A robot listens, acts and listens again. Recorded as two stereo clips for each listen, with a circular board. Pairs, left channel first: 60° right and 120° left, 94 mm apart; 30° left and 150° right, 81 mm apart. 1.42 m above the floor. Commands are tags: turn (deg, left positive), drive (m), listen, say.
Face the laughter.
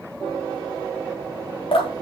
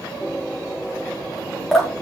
<listen/>
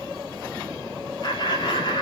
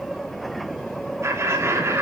<turn deg="-95"/>
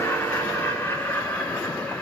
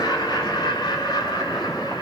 <turn deg="15"/>
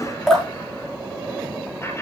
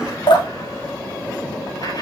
<listen/>
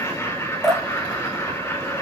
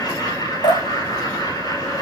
<say>Found it: laughter, straight ahead.</say>